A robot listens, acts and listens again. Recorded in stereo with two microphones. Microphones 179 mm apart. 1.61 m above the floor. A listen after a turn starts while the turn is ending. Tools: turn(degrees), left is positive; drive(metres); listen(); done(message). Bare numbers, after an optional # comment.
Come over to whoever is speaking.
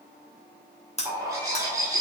listen()
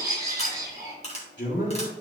turn(90)
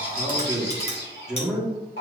drive(1.0)
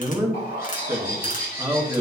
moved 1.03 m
# The man speaking is now 15° right.
turn(-15)
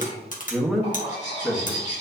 drive(1.0)
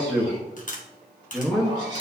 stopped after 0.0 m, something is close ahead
done("I am next to the man speaking.")